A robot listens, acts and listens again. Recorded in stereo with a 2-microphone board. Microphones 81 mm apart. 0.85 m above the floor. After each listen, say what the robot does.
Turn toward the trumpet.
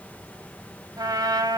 Turn 55° right.
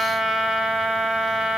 Facing the trumpet, 1 to 2 m away.